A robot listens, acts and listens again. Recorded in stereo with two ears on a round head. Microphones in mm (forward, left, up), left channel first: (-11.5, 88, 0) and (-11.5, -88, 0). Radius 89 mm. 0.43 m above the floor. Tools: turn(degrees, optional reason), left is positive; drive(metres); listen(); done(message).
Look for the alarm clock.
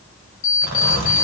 turn(degrees=70, reason="The alarm clock: about 70° left or 110° left.")
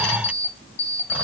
turn(degrees=30, reason="So it is at 30° left.")
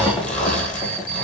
turn(degrees=15, reason="The alarm clock is now 15° left.")
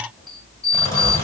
done("Found it: an alarm clock, straight ahead, 1 to 2 m away.")